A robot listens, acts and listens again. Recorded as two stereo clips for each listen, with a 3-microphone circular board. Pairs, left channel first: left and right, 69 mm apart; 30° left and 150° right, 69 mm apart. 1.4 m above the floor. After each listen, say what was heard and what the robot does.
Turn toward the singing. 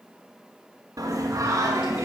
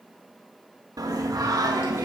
The singing: 135° right. Turn 135° right.
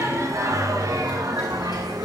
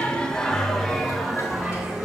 The singing is now 70° right. Turn 70° right.
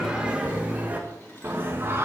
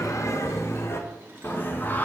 The singing is now 35° right. Turn 35° right.
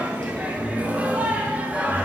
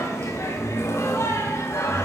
The singing is now 20° right. Turn 20° right.
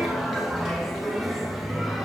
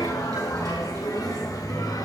Facing the singing, 1 to 2 m away.